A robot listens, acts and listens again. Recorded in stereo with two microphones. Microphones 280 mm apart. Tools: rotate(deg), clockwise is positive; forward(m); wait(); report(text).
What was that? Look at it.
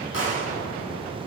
rotate(-50)
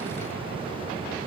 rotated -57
wait()
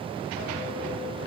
report("I heard a gunshot, but can't make it out now. It was about 10° right or 75° left.")